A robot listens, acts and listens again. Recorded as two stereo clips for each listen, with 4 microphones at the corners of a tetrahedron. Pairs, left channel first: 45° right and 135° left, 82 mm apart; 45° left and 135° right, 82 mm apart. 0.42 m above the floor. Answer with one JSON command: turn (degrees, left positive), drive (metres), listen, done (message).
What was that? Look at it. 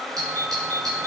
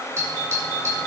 {"turn": 175}
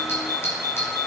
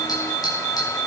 {"turn": 15}
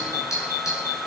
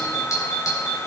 {"done": "Found it: a doorbell, straight ahead, over 4 m away."}